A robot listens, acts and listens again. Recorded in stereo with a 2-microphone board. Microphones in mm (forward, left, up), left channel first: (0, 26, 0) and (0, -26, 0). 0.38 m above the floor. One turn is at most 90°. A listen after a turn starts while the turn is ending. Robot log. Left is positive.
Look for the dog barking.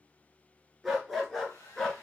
cmd yaw +30
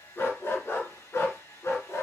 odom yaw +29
note: So it is at 110° left.
cmd yaw +90
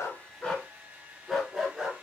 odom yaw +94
note: The dog barking is now 10° right.
cmd yaw -10
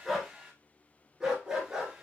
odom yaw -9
note: The dog barking is now 15° right.
cmd yaw -15
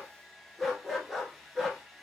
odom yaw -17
end: Facing the dog barking, 1 to 2 m away.